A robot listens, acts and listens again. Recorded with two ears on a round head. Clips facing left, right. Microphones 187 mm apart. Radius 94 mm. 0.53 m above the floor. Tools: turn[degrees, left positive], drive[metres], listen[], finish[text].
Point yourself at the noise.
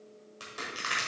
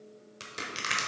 Thought: The crushing: about 30° right or 150° right.
Action: turn[-30]
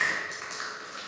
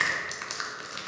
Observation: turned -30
Thought: So it is at 120° right.
Action: turn[-120]
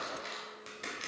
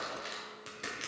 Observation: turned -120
Action: finish[Found it: crushing, straight ahead.]